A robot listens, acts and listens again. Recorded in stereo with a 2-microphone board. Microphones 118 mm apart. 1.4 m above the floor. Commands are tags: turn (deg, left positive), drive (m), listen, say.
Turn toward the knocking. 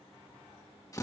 <listen/>
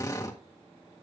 <listen/>
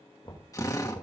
<turn deg="45"/>
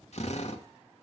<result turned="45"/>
<listen/>
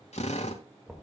<say>Facing the knocking.</say>